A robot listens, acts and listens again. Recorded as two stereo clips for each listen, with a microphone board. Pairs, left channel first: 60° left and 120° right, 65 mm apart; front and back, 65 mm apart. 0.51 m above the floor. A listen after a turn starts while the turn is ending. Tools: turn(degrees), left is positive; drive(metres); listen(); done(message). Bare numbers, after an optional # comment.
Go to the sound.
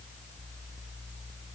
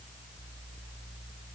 listen()
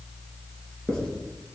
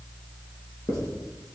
# The writing: 20° right.
turn(-20)
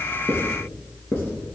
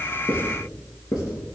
drive(1.0)
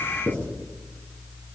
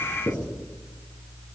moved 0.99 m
drive(1.0)
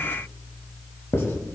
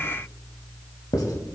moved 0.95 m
# The writing is now 10° left.
turn(10)
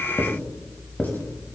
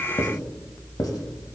drive(1.0)
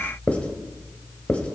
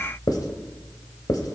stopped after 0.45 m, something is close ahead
# The writing is now 10° right.
turn(-10)
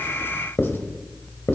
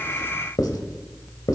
done("Arrived at the writing, straight ahead.")